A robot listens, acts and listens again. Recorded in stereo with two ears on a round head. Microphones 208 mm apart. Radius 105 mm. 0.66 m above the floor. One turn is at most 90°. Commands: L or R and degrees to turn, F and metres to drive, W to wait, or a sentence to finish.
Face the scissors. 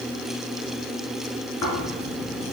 W
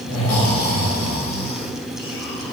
W
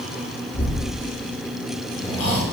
I can't make out scissors to turn to.